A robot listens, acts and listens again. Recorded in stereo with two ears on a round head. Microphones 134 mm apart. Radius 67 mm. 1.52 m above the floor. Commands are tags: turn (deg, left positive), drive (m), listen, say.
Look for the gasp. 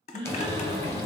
<turn deg="-30"/>
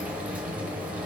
<listen/>
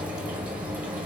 <say>I heard a gasp, but can't make it out now. It was about straight ahead or 120° right.</say>